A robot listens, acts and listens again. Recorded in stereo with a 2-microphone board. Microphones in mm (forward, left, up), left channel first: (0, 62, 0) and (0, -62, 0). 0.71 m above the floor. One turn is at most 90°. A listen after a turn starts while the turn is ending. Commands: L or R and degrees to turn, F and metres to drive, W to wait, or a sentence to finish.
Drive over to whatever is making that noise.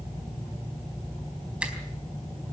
R30
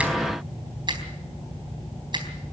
R90
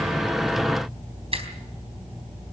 R50
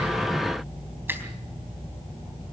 R15
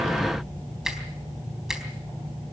F1.0
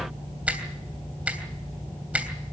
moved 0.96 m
R10
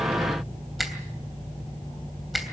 F1.0
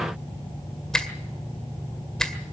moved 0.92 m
F1.0
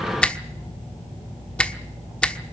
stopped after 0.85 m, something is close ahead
L10
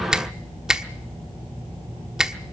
I am next to the finger snap.